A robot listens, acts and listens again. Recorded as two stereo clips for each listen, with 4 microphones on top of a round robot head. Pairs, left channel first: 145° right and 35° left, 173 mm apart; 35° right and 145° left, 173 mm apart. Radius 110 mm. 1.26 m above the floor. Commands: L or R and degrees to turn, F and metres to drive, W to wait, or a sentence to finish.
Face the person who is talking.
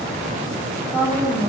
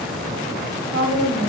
L130
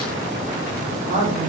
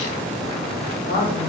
Found it: a woman speaking, straight ahead.